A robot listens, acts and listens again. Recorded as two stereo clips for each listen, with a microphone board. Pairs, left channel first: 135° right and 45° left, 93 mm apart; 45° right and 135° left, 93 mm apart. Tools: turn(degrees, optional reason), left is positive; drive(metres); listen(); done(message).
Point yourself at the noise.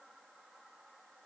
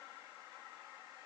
listen()
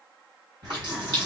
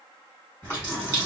turn(degrees=15, reason="The running tap: 15° left.")
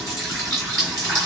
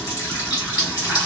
done("Facing the running tap, 1 to 2 m away.")